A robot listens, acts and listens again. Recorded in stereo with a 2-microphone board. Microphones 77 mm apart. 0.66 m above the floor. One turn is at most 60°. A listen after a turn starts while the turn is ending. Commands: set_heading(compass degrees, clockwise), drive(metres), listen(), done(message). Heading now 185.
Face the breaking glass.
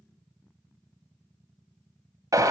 listen()
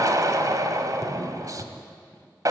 listen()
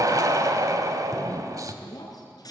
set_heading(125)
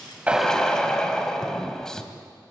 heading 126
listen()
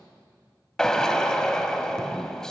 done("I heard breaking glass, but can't make it out now. It was about straight ahead or 60° left.")